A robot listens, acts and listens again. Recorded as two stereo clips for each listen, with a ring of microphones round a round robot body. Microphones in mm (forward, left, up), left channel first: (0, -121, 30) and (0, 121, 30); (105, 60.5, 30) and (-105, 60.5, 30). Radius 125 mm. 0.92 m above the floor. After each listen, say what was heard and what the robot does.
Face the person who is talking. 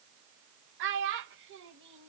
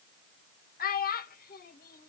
The child speaking: 45° left. Turn 45° left.
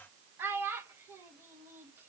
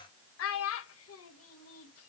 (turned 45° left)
The child speaking is now 10° left. Turn 10° left.
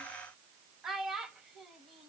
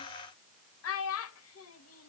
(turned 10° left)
Found it: a child speaking, straight ahead, under 1 m away.